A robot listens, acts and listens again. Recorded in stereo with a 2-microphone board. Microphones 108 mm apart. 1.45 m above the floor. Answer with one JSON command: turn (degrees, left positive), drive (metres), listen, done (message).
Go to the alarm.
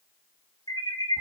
{"turn": 40}
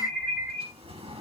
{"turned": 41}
{"drive": 1.0}
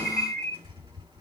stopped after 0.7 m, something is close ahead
{"done": "Blocked. The alarm is further on, straight ahead."}